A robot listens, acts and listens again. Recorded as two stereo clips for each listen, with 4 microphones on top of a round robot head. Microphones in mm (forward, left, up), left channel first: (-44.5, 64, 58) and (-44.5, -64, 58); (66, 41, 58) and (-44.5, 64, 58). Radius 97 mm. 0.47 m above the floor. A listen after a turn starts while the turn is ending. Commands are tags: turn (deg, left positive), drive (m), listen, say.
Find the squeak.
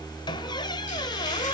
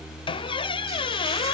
<turn deg="30"/>
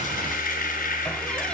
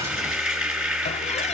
<listen/>
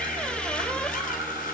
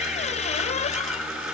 <say>Found it: a squeak, straight ahead.</say>